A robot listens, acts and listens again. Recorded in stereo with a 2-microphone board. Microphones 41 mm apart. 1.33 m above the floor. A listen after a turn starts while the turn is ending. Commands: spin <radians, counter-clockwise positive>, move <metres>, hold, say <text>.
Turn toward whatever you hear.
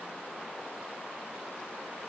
hold
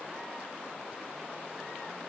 hold
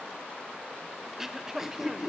spin -0.52
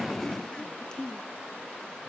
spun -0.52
spin 0.26
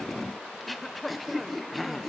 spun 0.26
say Found it: throat clearing, straight ahead, under 1 m away.